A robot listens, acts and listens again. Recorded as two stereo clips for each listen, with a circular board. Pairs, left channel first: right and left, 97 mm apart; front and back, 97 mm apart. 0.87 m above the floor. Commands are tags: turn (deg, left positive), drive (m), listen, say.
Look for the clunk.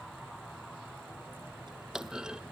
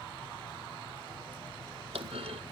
<turn deg="170"/>
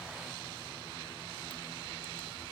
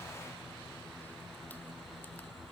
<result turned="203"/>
<turn deg="-30"/>
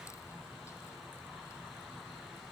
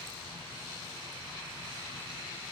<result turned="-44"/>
<turn deg="15"/>
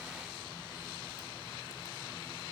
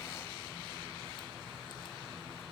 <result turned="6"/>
<say>I heard a clunk from this way, but can't make it out now.</say>